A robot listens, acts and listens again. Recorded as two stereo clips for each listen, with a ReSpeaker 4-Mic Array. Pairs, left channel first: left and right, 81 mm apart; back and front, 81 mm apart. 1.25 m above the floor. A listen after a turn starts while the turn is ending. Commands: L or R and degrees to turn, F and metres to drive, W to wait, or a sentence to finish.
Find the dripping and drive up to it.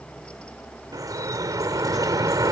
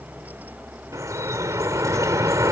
R50
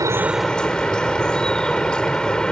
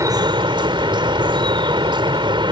L10
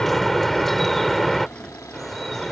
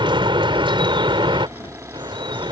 F1.0
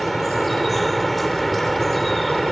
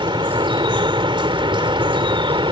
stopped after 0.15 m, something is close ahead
Blocked. The dripping is further on, straight ahead.